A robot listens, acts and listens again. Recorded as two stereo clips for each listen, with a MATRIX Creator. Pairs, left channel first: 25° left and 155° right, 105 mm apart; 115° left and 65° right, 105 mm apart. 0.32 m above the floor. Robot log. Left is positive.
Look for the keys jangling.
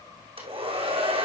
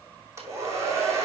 cmd idle
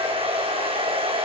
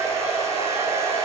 cmd idle
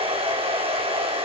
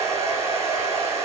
end: I can't make out keys jangling, only a hair dryer.